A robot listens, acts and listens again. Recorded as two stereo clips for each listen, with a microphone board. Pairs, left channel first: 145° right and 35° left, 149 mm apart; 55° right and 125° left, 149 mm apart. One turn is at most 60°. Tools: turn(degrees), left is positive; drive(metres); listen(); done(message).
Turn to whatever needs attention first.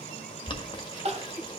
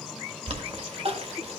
turn(degrees=60)
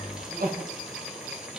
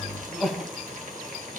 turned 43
turn(degrees=35)
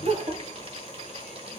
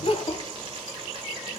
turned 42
done("Facing the crying.")